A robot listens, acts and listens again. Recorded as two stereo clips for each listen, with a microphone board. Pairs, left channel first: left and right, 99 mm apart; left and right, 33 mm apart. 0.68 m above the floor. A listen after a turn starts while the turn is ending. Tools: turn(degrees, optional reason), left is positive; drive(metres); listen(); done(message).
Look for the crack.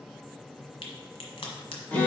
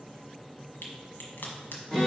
turn(degrees=75, reason="The crack: about 75° left or 105° left.")
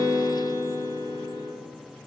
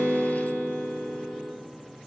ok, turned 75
listen()
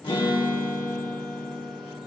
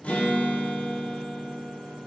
done("I heard a crack, but can't make it out now. It was about straight ahead or 30° left.")